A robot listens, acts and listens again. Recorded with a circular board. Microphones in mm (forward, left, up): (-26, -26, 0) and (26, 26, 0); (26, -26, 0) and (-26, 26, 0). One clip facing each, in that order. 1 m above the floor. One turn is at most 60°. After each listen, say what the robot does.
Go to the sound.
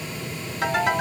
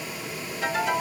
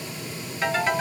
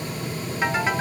Turn 60° right.
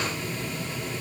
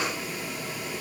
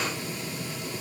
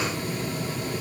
Turn 60° right.
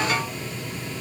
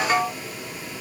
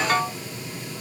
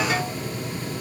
Turn 10° right.
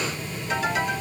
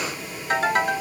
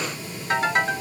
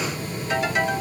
Drive 1.0 m forward.
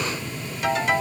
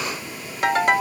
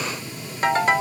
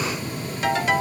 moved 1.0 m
Turn 10° left.
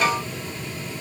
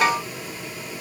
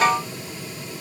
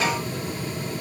Drive 1.0 m forward.
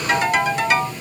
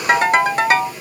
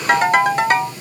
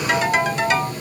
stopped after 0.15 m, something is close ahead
I am next to the ringtone.